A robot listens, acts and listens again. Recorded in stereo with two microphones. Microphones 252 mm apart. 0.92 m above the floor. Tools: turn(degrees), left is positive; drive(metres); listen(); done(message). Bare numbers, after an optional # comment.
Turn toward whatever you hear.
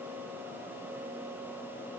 listen()
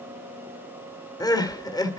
# The crying: about 15° left or 165° left.
turn(15)
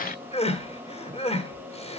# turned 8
# The crying: about 25° left or 155° left.
turn(25)
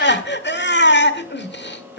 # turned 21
# So it is at 135° left.
turn(135)
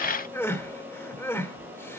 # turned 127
# The crying is now 10° left.
turn(10)
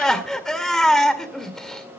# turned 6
done("Facing the crying, 1 to 2 m away.")